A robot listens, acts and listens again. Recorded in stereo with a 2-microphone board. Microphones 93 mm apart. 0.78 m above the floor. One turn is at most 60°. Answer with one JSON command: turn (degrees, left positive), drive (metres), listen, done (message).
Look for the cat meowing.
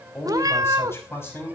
{"turn": -40}
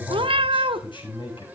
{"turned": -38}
{"turn": -60}
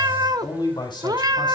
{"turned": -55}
{"turn": -45}
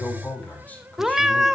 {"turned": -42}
{"done": "Facing the cat meowing."}